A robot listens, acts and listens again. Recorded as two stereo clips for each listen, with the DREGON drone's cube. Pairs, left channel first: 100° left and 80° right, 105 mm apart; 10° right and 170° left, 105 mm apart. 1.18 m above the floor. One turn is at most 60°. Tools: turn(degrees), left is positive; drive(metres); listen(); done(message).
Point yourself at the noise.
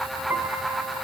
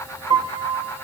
turn(degrees=-60)
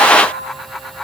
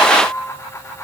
turn(degrees=-60)
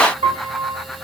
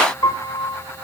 turn(degrees=-60)
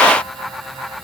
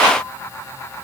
listen()
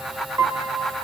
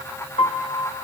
turn(degrees=-20)
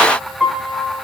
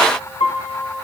done("Found it: a piano, straight ahead, 1 to 2 m away.")